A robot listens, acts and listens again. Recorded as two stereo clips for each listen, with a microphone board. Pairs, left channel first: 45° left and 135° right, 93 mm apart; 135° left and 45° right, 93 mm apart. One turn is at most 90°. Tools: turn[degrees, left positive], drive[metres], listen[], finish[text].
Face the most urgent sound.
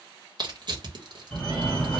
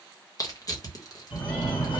Thought: The fire alarm: 130° left.
Action: turn[90]
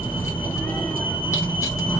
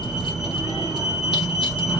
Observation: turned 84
Thought: The fire alarm is now 45° left.
Action: turn[45]
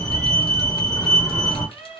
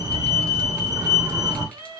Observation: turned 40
Action: finish[Found it: a fire alarm, straight ahead, 1 to 2 m away.]